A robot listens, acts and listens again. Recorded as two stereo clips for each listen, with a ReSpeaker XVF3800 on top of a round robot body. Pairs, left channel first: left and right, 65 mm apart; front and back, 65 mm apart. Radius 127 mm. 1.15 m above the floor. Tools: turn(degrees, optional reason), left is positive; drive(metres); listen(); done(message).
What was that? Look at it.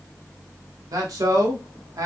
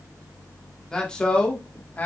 turn(degrees=-65, reason="The man speaking: 65° right.")
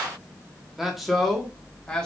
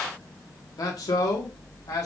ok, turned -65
turn(degrees=15, reason="The man speaking is now 15° left.")
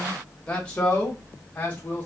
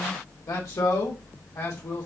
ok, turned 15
turn(degrees=30, reason="The man speaking is now 30° left.")
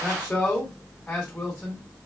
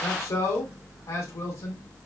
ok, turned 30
turn(degrees=10, reason="The man speaking is now 10° left.")
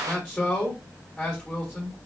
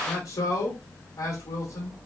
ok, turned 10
done("Facing the man speaking, 2 to 4 m away.")